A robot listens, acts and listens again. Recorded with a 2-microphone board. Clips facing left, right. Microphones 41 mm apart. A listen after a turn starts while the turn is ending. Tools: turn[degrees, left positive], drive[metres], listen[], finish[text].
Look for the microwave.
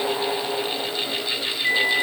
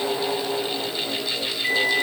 Thought: The microwave: about 65° right or 115° right.
Action: turn[-65]
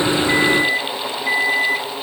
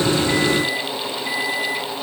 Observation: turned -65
Action: finish[Found it: a microwave, straight ahead, 1 to 2 m away.]